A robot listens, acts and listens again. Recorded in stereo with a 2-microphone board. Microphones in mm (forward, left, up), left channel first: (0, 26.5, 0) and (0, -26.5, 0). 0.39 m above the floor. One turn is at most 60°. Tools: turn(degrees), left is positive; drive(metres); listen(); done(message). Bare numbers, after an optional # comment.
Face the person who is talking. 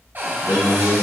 # The man speaking: about 60° left or 120° left.
turn(60)
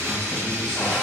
listen()
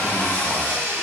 listen()
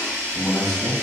# So it is at 20° left.
turn(20)
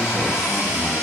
listen()
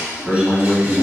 # The man speaking is now 10° right.
turn(-10)
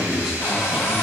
done("Found it: a man speaking, straight ahead.")